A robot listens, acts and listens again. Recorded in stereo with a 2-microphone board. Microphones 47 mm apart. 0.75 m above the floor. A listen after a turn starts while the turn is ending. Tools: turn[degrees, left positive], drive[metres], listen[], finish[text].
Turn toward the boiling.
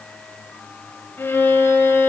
Action: listen[]
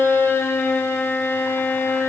Action: listen[]
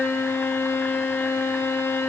Action: finish[I can't make out boiling to turn to.]